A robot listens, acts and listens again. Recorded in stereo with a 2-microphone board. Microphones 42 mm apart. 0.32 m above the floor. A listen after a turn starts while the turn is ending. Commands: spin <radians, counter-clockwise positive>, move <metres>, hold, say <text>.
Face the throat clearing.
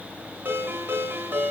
hold
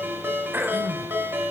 spin -0.79
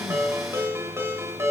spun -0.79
hold
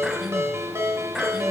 hold
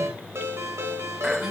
say I heard throat clearing, but can't make it out now. It was about straight ahead or 90° right.